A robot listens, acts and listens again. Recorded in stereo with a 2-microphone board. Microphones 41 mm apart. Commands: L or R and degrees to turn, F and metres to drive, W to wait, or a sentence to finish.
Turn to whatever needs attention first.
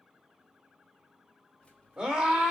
R35
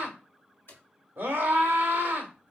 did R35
R105
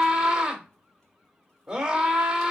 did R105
R10
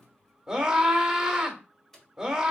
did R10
Facing the scream, 1 to 2 m away.